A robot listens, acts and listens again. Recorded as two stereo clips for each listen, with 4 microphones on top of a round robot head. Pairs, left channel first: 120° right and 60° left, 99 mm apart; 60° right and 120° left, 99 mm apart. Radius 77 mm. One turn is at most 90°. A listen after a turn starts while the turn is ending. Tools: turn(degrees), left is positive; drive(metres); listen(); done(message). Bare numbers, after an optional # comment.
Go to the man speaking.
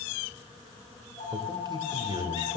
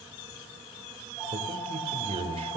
# The man speaking: 105° left.
turn(90)
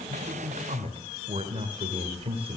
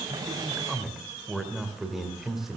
# The man speaking is now 35° left.
turn(35)
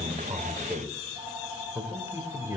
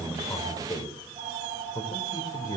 drive(1.0)
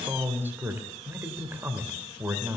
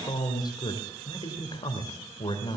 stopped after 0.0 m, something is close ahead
# The man speaking is now 10° right.
turn(-10)
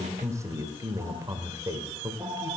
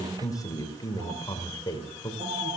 done("Blocked. The man speaking is further on, straight ahead.")